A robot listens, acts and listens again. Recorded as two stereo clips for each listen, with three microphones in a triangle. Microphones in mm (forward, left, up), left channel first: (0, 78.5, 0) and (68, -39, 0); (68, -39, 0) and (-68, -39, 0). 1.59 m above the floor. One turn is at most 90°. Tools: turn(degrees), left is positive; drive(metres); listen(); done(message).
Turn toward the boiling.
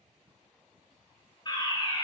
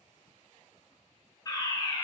listen()
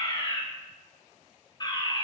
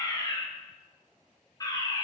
listen()
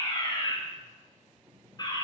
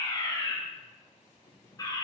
turn(degrees=25)
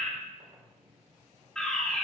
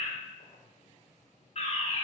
done("Found it: boiling, straight ahead, over 4 m away.")